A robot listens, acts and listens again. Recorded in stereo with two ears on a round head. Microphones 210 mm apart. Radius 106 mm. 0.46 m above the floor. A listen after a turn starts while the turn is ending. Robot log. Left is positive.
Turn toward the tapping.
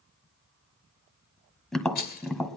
cmd yaw +30
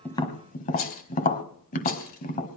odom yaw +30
note: So it is at 145° left.
cmd yaw +145
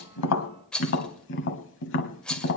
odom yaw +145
note: The tapping is now 50° left.
cmd yaw +50
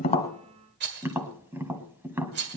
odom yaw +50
note: The tapping is now 10° right.
cmd yaw -10
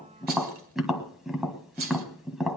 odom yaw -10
end: Found it: tapping, straight ahead, 1 to 2 m away.